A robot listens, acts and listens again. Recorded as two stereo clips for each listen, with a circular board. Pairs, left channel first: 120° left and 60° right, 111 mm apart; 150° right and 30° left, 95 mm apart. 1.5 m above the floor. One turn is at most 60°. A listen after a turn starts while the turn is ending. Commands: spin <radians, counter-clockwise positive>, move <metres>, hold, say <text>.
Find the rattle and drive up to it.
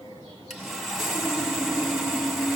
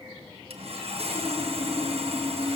hold
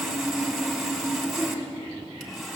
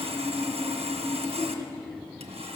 hold
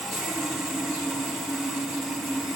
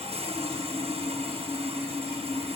say I can't make out a rattle, only sawing.